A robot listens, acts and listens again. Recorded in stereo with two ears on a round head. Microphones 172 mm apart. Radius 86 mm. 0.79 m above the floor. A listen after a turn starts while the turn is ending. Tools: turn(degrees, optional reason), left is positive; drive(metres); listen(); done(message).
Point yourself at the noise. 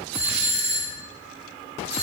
turn(degrees=-35, reason="The doorbell: about 35° right or 145° right.")
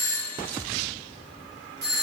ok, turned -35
turn(degrees=-105, reason="So it is at 105° right.")
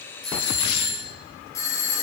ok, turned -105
turn(degrees=20, reason="The doorbell is now 20° left.")
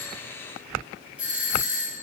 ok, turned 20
done("Facing the doorbell.")